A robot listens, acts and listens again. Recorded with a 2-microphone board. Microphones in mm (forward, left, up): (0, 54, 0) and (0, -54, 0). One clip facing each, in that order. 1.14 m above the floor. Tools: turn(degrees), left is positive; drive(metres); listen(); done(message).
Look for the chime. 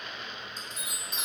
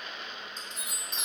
turn(degrees=30)
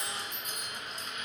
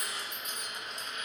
turn(degrees=145)
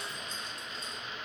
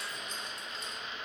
listen()
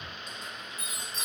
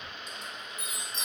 turn(degrees=40)
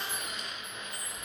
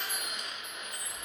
turn(degrees=-20)
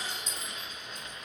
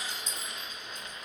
listen()
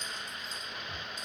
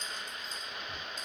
listen()
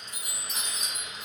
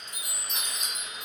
done("Facing the chime, 1 to 2 m away.")